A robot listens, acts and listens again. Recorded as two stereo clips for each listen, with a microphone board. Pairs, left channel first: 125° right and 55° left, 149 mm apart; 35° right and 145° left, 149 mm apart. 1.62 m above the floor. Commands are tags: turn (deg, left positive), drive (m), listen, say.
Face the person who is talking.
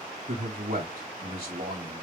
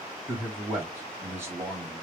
<turn deg="70"/>
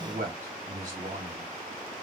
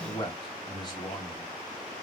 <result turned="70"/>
<turn deg="25"/>
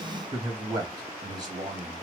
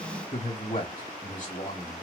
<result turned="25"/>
<say>Found it: a man speaking, straight ahead, 1 to 2 m away.</say>